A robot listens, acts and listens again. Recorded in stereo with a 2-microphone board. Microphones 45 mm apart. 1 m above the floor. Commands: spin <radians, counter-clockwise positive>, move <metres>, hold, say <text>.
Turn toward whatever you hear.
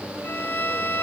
spin 0.96
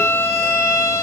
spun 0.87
spin 1.31
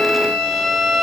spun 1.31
say Found it: a violin, straight ahead, 2 to 4 m away.